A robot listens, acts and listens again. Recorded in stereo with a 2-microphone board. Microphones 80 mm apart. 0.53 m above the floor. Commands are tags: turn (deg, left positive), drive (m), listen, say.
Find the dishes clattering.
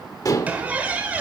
<turn deg="40"/>
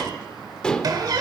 <turn deg="10"/>
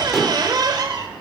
<say>Facing the dishes clattering.</say>